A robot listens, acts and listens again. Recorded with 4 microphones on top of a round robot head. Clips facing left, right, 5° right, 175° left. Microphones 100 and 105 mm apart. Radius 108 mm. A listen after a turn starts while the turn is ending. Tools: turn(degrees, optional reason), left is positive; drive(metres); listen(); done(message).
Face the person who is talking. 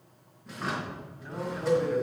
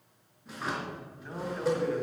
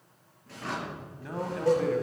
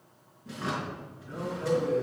done("Found it: a man speaking, straight ahead, 2 to 4 m away.")